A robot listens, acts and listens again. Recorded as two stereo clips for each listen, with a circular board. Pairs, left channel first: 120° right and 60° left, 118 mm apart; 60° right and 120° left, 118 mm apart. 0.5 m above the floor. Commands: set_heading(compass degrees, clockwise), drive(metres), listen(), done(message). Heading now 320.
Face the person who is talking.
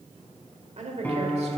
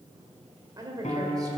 set_heading(255)
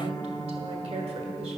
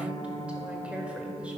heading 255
set_heading(215)
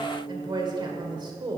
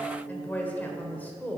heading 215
set_heading(200)
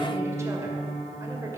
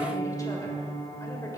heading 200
listen()
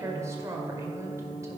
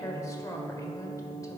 done("Facing the woman speaking, 1 to 2 m away.")